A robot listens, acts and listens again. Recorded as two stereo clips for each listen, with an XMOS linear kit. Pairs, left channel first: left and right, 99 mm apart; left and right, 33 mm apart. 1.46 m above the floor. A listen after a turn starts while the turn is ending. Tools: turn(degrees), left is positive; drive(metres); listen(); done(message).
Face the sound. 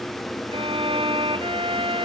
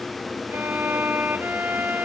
turn(degrees=-70)
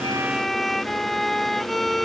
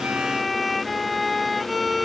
done("Facing the violin.")